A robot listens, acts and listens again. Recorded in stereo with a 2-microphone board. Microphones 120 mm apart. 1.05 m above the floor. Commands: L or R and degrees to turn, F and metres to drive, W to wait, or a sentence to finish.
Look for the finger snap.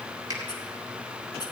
R35
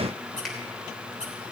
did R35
W
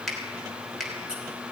Found it: a finger snap, straight ahead, 2 to 4 m away.